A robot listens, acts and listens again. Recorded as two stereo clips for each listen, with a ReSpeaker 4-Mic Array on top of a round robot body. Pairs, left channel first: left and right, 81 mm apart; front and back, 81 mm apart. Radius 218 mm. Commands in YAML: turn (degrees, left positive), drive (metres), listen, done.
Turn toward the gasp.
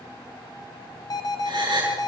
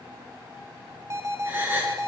turn: -115
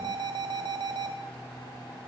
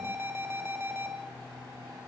done: "I heard a gasp from this way, but can't make it out now."